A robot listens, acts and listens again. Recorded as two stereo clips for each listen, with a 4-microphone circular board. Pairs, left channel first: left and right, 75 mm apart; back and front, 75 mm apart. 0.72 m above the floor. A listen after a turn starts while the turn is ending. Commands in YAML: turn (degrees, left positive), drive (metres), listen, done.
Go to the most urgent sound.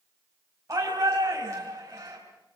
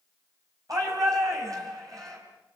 turn: -40
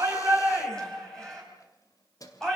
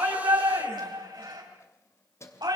turn: 10
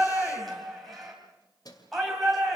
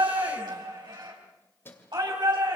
drive: 1.0
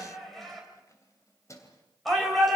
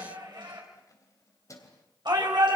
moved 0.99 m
drive: 1.0
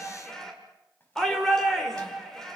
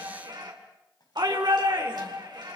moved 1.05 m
turn: 10
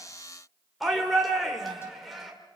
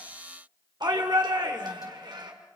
drive: 1.0
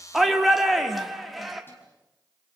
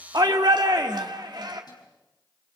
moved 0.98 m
drive: 1.0
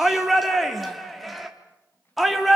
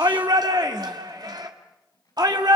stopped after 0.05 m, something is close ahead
done: "I am next to the shout."